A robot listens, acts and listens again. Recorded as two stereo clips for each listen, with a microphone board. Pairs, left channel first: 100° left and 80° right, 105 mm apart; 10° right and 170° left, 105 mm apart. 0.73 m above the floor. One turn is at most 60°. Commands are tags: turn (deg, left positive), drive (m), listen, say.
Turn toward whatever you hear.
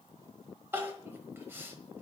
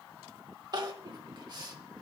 <turn deg="-60"/>
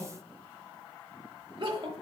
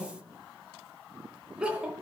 <turn deg="-60"/>
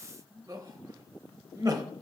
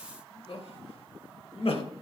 <turn deg="-30"/>
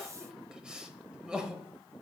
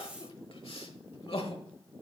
<say>Facing the crying.</say>